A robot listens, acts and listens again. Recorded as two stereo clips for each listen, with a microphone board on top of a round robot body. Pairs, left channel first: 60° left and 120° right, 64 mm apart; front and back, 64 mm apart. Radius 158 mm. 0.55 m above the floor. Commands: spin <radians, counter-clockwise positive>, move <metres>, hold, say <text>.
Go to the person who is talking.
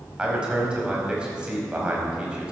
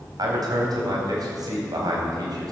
spin 2.88
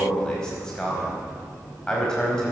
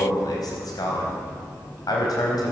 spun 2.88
spin -0.35
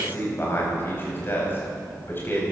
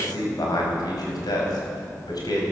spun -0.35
move 1.0
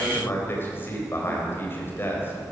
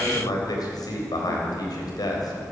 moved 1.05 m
move 1.0
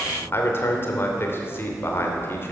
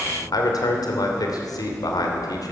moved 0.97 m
spin 0.17
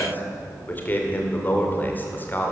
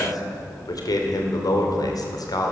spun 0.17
move 1.0
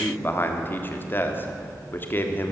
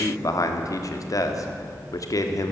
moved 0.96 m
spin 0.17
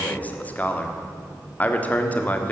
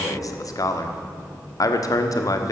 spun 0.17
move 1.0
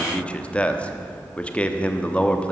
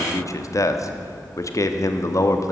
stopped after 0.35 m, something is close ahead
say I am next to the man speaking.